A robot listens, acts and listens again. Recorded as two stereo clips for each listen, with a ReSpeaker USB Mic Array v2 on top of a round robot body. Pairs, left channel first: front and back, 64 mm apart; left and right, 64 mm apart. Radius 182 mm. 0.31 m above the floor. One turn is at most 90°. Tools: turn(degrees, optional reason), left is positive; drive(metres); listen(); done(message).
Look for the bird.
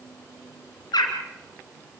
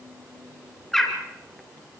done("Found it: a bird, straight ahead, 2 to 4 m away.")